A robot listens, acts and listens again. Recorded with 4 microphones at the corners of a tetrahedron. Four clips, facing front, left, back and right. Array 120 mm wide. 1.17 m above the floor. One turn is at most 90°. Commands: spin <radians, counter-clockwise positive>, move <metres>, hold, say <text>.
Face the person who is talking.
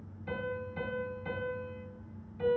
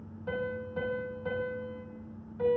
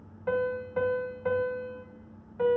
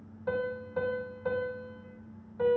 hold
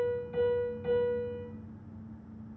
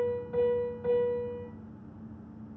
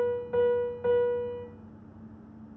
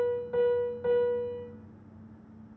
hold
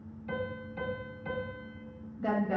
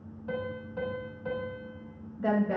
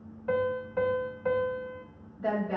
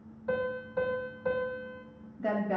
spin 1.57
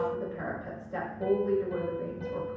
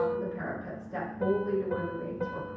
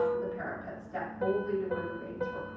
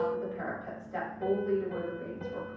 spin 0.70
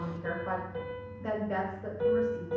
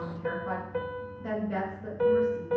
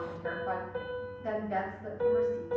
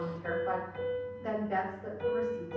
spin 0.17
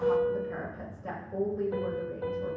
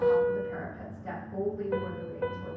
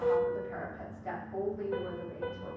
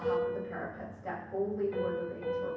say Found it: a woman speaking, straight ahead.